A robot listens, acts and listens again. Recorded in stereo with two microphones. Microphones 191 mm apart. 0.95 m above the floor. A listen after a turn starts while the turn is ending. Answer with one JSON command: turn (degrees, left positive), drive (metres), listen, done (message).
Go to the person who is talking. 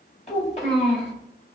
{"turn": 35}
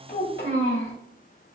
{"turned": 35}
{"turn": 105}
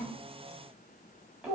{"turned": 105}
{"drive": 1.0}
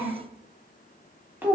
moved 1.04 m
{"turn": -10}
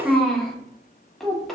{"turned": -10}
{"drive": 1.0}
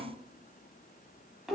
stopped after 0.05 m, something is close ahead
{"done": "Arrived at the child speaking, straight ahead."}